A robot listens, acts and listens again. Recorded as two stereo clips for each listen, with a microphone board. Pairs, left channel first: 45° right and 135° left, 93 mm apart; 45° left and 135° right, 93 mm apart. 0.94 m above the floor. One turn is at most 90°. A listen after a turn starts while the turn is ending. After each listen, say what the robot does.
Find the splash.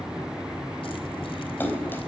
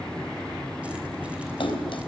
Turn 20° left.
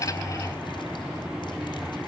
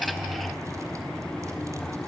Facing where the splash came from. I can't hear it now.